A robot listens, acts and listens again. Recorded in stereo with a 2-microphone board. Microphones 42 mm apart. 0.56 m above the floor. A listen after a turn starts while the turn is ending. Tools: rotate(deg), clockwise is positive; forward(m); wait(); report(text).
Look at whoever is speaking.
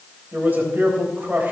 rotate(50)
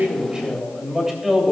rotate(10)
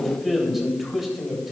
report("Facing the man speaking.")